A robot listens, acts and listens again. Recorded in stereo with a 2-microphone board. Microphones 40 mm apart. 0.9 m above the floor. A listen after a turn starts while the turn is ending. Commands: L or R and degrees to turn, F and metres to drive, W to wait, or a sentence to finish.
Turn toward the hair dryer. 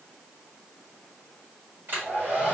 R55
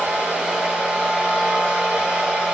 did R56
R20
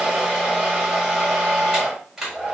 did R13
Facing the hair dryer.